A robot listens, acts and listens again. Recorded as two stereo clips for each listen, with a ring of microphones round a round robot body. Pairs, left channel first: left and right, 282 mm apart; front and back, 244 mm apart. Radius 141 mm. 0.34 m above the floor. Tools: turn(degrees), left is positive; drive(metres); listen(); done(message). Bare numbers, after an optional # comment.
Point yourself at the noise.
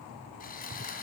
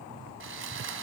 # The sawing: 150° left.
turn(150)
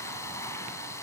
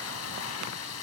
# The sawing is now 10° left.
turn(10)
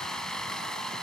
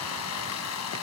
done("Found it: sawing, straight ahead.")